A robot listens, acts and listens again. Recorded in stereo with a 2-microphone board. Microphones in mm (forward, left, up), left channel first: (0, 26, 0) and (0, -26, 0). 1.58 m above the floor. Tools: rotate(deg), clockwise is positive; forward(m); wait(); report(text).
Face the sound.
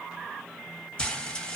rotate(-15)
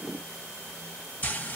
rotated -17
rotate(-145)
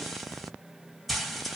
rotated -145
report("Facing the frying.")